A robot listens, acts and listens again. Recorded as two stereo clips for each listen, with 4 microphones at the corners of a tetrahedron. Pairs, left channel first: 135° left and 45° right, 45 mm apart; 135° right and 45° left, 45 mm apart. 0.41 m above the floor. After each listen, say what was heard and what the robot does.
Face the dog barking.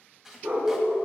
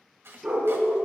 The dog barking: 30° right. Turn 30° right.
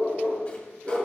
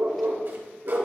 The dog barking is now 10° left. Turn 10° left.
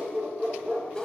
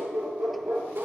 Found it: a dog barking, straight ahead.